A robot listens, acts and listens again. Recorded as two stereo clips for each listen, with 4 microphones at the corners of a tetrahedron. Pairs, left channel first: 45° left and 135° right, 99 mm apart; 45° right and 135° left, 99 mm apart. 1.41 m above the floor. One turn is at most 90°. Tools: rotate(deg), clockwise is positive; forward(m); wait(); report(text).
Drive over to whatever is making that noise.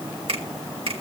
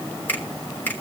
rotate(90)
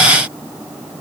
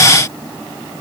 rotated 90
rotate(25)
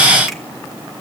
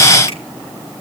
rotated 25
wait()
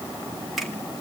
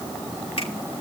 rotate(45)
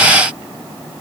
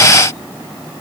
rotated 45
wait()
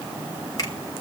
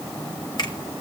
forward(1.0)
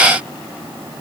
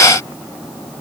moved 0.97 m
wait()
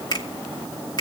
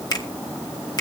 forward(1.0)
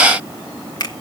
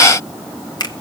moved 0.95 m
forward(1.0)
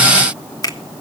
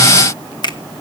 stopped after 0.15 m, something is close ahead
report("Arrived at the finger snap, straight ahead.")